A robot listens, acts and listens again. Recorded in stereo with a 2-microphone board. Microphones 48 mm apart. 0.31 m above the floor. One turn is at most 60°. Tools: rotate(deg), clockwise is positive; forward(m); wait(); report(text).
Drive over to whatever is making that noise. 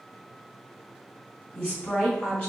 rotate(-20)
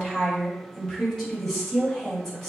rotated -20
rotate(-10)
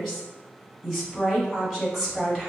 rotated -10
forward(1.0)
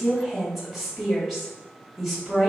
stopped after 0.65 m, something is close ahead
report("I am next to the woman speaking.")